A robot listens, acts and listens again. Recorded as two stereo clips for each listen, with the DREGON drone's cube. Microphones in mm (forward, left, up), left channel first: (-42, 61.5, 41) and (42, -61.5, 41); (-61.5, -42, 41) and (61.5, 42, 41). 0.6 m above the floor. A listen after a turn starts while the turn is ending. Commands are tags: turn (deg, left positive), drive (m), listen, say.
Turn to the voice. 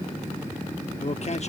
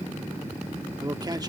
<turn deg="95"/>
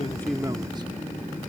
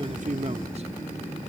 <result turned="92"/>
<listen/>
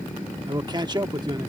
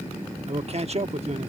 <say>Facing the man speaking.</say>